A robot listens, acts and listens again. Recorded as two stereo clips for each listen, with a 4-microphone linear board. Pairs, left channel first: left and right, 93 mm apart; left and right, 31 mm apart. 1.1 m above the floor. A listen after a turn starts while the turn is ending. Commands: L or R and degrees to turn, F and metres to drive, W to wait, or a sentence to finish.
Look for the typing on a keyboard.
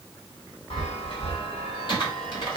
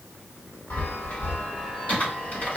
L60
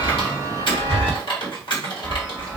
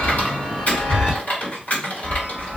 L60
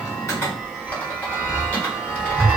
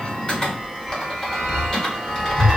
L20
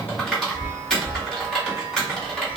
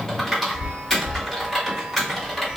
Facing the typing on a keyboard, 1 to 2 m away.